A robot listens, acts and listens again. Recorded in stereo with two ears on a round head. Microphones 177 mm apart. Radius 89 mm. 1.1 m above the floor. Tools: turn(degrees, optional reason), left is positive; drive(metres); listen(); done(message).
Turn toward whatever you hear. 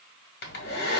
turn(degrees=55, reason="The hair dryer: about 55° left or 125° left.")
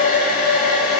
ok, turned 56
turn(degrees=55, reason="So it is at 55° left.")
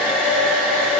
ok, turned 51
done("Facing the hair dryer, 1 to 2 m away.")